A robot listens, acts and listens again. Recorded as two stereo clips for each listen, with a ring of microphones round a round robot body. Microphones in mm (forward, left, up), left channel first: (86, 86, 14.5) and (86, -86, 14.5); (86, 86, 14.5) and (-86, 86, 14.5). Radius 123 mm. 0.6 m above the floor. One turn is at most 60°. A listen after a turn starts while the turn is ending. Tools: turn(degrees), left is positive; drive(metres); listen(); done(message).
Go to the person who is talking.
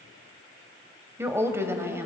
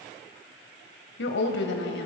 turn(degrees=-15)
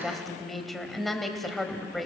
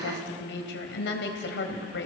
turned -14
drive(metres=1.0)
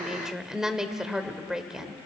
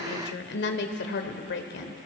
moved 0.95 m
drive(metres=1.0)
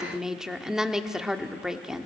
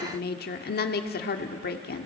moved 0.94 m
drive(metres=1.0)
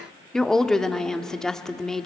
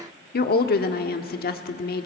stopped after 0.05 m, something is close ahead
done("Arrived at the woman speaking, straight ahead.")